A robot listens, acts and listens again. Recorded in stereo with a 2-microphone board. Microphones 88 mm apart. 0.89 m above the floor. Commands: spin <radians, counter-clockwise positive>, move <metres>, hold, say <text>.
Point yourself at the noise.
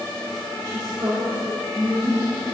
spin -0.70
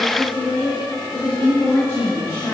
spin 0.61
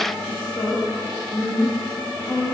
spin 0.44
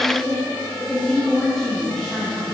say Found it: a woman speaking, straight ahead, 1 to 2 m away.